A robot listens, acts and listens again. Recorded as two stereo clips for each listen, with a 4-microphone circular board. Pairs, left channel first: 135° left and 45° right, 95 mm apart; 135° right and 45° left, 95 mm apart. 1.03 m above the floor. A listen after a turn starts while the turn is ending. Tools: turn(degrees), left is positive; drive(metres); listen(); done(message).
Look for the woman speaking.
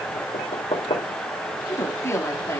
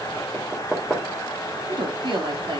turn(degrees=75)
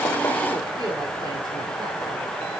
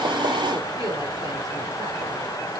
listen()
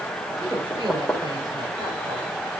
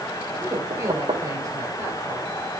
turn(degrees=-10)
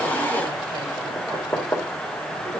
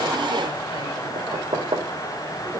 listen()
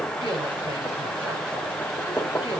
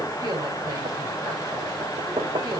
listen()
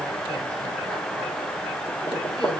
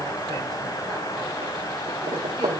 done("Facing where the woman speaking came from. I can't hear it now.")